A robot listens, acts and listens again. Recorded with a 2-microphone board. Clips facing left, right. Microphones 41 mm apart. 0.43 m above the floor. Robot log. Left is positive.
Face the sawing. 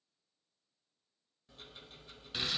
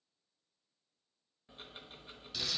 cmd idle
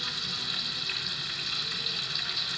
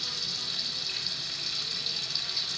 cmd idle
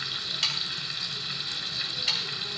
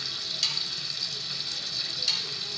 note: The sawing: about 35° left or 145° left.
cmd yaw +35
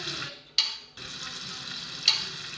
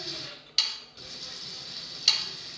end: Found it: sawing, straight ahead.